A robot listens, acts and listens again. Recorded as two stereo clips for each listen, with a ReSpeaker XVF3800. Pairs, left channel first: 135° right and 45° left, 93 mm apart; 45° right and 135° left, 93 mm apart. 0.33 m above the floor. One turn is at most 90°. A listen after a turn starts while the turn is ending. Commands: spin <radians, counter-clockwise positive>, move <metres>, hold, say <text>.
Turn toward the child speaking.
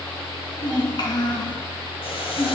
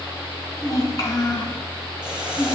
spin -1.57
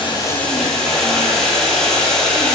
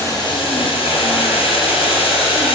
spin -0.44
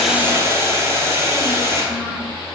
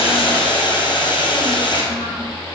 hold
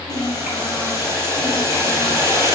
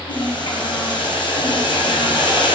spin -0.52
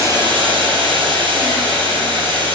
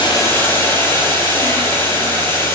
hold
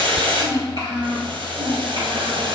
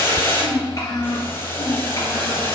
say Facing the child speaking.